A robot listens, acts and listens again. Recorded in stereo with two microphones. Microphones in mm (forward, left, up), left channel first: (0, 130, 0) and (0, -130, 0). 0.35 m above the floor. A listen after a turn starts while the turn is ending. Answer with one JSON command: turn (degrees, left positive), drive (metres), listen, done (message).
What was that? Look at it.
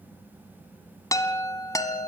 {"turn": 30}
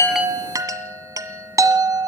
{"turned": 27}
{"turn": -15}
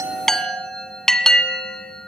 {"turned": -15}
{"done": "Found it: a chime, straight ahead, 1 to 2 m away."}